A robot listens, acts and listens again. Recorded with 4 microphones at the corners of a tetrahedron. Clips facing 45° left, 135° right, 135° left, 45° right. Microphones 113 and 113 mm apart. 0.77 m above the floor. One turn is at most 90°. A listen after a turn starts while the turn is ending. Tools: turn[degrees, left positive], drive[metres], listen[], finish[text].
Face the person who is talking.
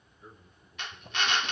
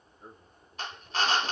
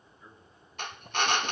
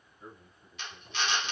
Thought: The man speaking: 100° right.
Action: turn[-90]
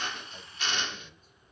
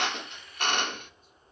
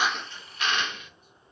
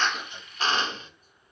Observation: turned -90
Thought: Nothing new. It was at 10° right.
Action: turn[-10]
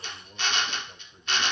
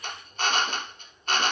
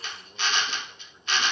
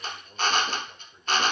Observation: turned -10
Thought: The man speaking is now 20° left.
Action: turn[20]
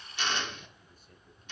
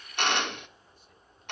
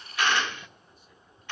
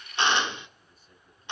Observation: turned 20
Action: listen[]
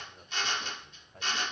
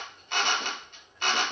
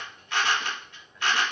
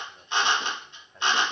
Thought: The man speaking is now 10° left.
Action: turn[10]
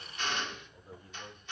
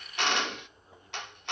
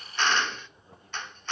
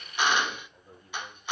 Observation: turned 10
Action: finish[Facing the man speaking, over 4 m away.]